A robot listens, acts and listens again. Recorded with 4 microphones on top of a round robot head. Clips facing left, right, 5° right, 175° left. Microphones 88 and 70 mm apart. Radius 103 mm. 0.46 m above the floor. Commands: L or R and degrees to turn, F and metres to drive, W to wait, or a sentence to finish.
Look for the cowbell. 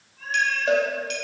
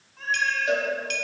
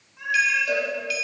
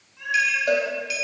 L140
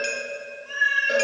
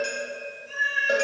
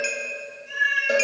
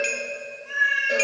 R25
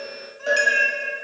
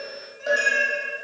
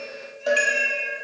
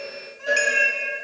Facing the cowbell, 1 to 2 m away.